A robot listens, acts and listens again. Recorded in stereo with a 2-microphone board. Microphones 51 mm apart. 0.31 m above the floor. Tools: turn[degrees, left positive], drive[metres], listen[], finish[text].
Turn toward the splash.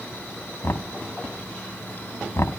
Action: listen[]
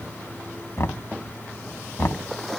Action: turn[30]
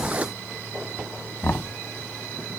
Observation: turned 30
Action: listen[]
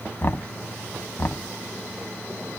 Action: finish[I heard a splash, but can't make it out now. It was about 25° right or 145° left.]